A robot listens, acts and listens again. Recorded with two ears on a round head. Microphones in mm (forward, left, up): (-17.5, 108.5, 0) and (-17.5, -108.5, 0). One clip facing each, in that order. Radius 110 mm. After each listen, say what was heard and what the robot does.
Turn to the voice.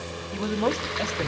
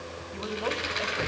The man speaking: about 55° left or 125° left. Turn 55° left.
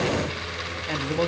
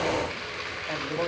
Keep listening.
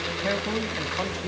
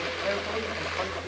So it is at 50° left. Turn 50° left.
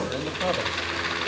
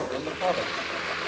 Keep listening.
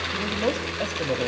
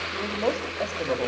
Keep listening.
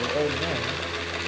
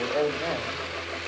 Facing where the man speaking came from. I can't hear it now.